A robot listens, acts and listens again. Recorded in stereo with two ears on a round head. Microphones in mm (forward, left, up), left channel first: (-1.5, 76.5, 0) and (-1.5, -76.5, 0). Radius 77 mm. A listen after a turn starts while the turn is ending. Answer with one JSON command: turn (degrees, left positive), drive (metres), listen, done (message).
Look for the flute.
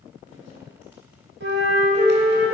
{"turn": -90}
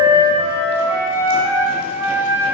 {"turn": -15}
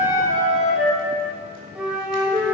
{"done": "Found it: a flute, straight ahead, 1 to 2 m away."}